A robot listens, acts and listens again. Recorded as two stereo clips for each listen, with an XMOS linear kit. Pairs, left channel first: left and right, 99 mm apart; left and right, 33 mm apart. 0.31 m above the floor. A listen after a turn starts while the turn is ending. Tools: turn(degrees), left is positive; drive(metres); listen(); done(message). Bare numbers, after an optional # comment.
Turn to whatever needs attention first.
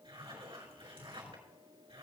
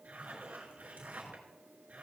listen()
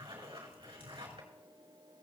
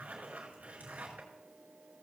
listen()
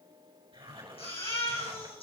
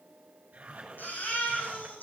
turn(90)
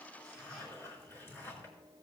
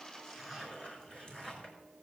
listen()
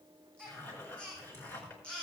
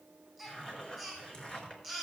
# The baby crying is now 10° left.
turn(10)
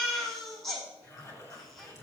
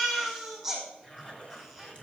done("Found it: a baby crying, straight ahead.")